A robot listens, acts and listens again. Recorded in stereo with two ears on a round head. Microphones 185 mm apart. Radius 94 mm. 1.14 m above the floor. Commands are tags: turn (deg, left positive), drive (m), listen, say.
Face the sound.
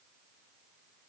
<listen/>
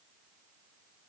<listen/>
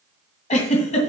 <turn deg="35"/>
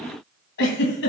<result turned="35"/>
<turn deg="105"/>
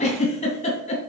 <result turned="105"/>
<turn deg="35"/>
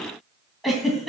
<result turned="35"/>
<say>Facing the giggle.</say>